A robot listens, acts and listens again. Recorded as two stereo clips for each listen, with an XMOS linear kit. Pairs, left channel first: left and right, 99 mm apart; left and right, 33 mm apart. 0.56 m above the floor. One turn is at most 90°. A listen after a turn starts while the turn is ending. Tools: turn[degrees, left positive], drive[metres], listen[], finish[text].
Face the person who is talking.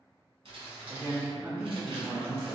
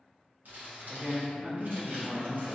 Thought: The man speaking: about 20° right or 160° right.
Action: turn[-20]
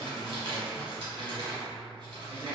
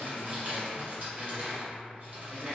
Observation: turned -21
Action: listen[]
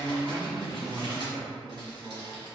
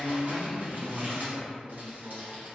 Action: finish[Facing the man speaking.]